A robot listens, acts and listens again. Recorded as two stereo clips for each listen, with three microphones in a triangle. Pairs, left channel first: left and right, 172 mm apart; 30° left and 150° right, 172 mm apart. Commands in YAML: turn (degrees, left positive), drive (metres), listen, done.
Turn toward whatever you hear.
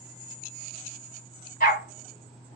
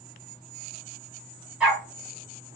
turn: 125
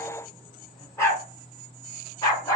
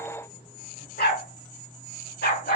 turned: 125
turn: 20
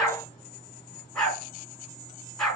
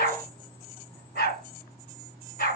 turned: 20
done: "Facing the dog barking."